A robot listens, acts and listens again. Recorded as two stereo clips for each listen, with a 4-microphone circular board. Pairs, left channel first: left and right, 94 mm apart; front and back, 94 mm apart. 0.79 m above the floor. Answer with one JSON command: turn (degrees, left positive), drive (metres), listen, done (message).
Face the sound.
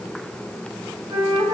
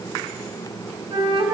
{"turn": -135}
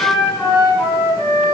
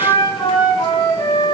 {"turn": 40}
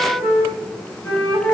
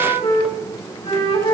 {"turn": 10}
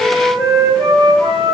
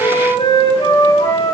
{"done": "Facing the flute."}